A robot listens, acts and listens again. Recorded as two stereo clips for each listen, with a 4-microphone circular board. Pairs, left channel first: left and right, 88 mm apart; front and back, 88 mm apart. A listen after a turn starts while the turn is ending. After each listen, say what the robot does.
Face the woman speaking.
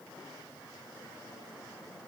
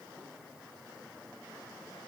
Keep listening.
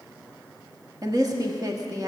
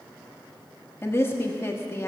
Turn 55° right.
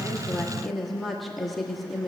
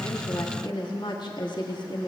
Facing the woman speaking, 1 to 2 m away.